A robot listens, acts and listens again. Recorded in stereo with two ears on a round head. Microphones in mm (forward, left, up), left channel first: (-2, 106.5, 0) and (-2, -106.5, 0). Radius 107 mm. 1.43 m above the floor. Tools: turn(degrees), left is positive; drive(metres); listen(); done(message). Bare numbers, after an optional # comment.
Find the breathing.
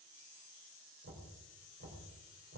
listen()
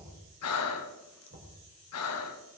# The breathing: about 70° left or 110° left.
turn(70)
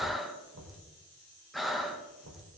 done("Facing the breathing, 1 to 2 m away.")